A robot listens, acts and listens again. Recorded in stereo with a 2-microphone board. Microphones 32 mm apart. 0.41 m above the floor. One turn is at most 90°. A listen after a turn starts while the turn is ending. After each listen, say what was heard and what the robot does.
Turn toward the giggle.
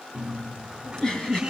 The giggle: about 20° left or 160° left. Turn 20° left.
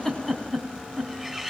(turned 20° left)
Facing the giggle.